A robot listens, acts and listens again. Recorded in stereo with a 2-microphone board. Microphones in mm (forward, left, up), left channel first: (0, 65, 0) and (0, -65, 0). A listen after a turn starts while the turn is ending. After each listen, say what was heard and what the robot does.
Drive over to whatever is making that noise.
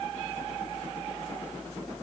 Keep listening.
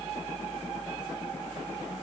Keep listening.
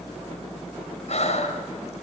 The breathing: about 60° left or 120° left. Turn 60° left.
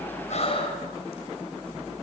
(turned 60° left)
So it is at 55° left. Turn 55° left.
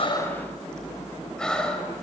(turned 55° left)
Drive 1.0 m forward.
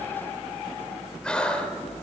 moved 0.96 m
The breathing is now 10° left. Turn 10° left.
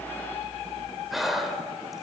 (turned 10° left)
Drive 1.0 m forward.
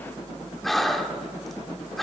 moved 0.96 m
Drive 1.0 m forward.
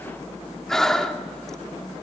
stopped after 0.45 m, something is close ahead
Arrived at the breathing, straight ahead.